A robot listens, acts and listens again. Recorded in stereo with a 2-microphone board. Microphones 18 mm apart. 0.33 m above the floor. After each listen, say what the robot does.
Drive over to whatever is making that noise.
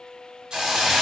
Turn 65° right.
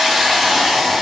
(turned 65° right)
Turn 20° right.
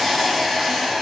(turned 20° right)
Drive 1.0 m forward.
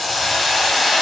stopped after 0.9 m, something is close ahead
Arrived at the hiss, straight ahead.